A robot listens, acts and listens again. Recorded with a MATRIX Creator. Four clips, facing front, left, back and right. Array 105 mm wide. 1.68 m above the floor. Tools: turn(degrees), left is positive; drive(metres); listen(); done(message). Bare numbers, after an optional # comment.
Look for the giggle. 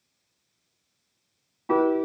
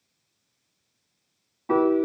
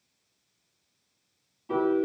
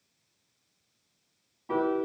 listen()
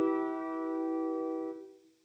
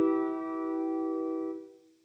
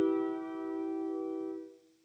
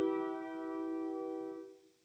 listen()
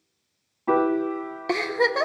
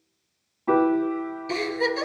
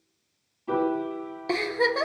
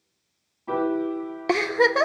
# The giggle: 75° right.
turn(-75)
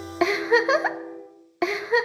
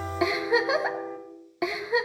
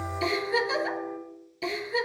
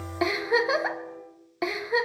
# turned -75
done("Facing the giggle.")